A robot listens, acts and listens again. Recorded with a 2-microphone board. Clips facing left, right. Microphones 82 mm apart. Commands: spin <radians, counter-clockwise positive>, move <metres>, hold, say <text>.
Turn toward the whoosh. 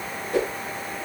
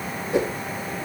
spin -0.44
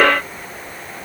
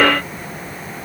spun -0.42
hold
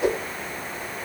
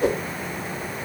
spin -2.36
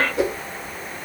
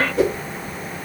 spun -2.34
say Facing the whoosh.